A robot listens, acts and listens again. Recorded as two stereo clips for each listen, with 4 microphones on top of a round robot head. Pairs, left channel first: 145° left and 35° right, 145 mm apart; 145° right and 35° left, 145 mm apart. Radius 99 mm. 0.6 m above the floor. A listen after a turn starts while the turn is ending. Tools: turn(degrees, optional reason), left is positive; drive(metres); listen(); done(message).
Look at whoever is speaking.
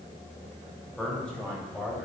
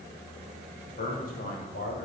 turn(degrees=-135, reason="The man speaking: 135° right.")
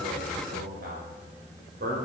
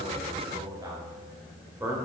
turn(degrees=-40, reason="The man speaking is now 40° right.")
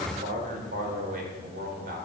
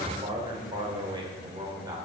turn(degrees=-35, reason="The man speaking is now 35° right.")
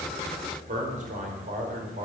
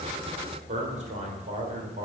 done("Found it: a man speaking, straight ahead, 2 to 4 m away.")